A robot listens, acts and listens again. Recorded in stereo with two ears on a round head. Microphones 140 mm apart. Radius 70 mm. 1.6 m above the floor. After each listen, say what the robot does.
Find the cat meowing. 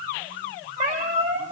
Turn 50° right.
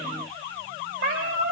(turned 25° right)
Turn 100° right.
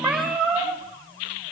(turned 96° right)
Facing the cat meowing, over 4 m away.